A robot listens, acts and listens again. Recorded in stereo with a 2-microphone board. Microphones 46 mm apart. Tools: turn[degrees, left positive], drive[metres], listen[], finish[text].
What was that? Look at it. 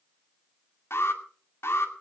Thought: The alarm: about 65° left or 115° left.
Action: turn[65]
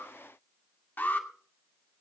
Thought: So it is at 50° left.
Action: turn[50]
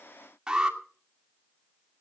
Thought: The alarm is now 15° right.
Action: turn[-15]
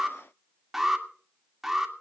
Action: finish[Facing the alarm, 2 to 4 m away.]